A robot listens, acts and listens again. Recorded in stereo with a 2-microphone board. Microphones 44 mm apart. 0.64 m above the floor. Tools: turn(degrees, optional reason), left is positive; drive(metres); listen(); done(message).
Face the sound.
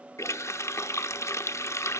turn(degrees=90)
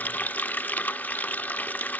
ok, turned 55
turn(degrees=35, reason="So it is at 35° left.")
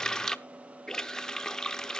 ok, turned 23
turn(degrees=10, reason="The running tap is now 10° left.")
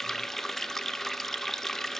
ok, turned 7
done("Facing the running tap.")